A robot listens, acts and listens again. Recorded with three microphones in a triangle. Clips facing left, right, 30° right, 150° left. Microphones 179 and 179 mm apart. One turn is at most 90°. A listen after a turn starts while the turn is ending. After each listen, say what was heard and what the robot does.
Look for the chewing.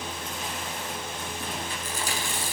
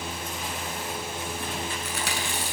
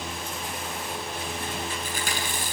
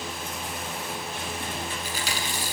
The chewing: 70° right. Turn 70° right.
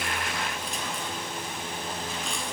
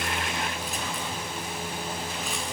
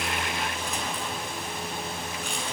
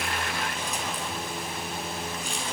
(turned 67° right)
Keep listening.
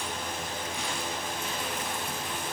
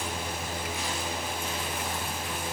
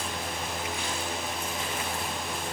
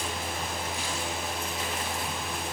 Keep listening.
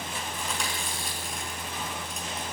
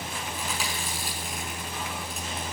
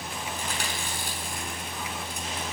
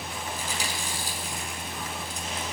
Found it: chewing, straight ahead.